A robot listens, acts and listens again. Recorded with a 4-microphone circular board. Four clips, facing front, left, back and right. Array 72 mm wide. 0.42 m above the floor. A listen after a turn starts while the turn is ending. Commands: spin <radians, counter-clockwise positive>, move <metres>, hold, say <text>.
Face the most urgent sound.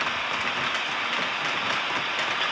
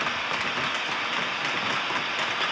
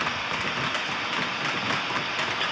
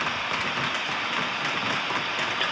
hold
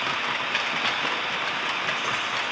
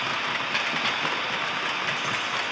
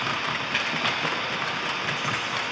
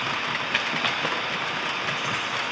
hold
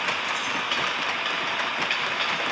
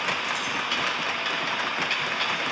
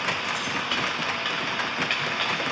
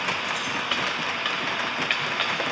say I can't make out anything urgent, only keys jangling.